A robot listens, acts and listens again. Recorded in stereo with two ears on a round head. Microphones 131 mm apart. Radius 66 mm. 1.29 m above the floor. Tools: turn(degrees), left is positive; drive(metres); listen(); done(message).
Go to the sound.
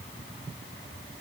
listen()
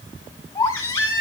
turn(degrees=20)
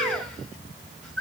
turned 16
drive(metres=1.0)
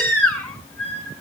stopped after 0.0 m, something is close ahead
done("Something is in my way. I am facing the baby crying but have not reached it.")